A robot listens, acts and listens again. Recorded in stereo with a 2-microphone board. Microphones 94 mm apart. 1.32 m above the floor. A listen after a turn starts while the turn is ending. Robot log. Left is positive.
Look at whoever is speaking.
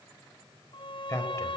note: The man speaking: about 30° left or 150° left.
cmd yaw +30
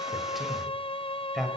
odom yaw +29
end: Found it: a man speaking, straight ahead, over 4 m away.